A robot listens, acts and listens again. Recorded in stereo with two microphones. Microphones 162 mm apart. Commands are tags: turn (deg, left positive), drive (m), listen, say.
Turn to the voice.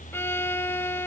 <listen/>
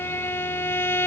<listen/>
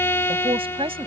<turn deg="-35"/>
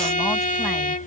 <listen/>
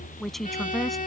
<say>Facing the man speaking.</say>